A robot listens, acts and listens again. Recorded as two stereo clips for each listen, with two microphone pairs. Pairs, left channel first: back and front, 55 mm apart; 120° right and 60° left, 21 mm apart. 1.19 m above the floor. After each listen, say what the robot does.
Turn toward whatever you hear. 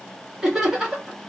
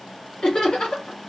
Turn 75° right.
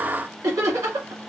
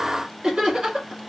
Turn 10° left.
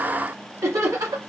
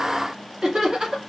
Facing the laughter, 1 to 2 m away.